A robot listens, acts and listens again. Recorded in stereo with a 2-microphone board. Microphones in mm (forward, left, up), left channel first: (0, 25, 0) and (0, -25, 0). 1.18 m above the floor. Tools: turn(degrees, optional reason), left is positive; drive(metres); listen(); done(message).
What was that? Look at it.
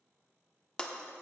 turn(degrees=20, reason="The breaking glass: about 20° left or 160° left.")
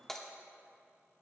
done("Facing the breaking glass.")